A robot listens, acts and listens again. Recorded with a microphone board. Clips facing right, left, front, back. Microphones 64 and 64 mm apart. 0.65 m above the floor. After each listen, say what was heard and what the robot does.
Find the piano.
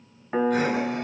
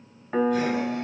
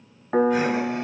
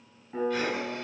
Facing the piano, 1 to 2 m away.